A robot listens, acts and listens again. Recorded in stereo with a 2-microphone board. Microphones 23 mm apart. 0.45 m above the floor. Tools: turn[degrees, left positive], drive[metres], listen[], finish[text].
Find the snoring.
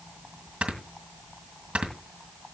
Thought: The snoring: about 75° right or 105° right.
Action: turn[-75]
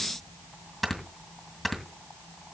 Action: finish[Facing the snoring, 2 to 4 m away.]